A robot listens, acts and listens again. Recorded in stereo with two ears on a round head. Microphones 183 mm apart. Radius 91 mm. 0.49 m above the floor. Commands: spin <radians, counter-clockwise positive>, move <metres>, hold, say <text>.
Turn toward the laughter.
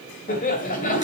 spin 0.79
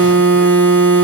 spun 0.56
hold
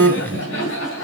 spin 1.92
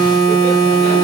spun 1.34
spin 0.61
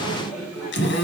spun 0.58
say Facing the laughter.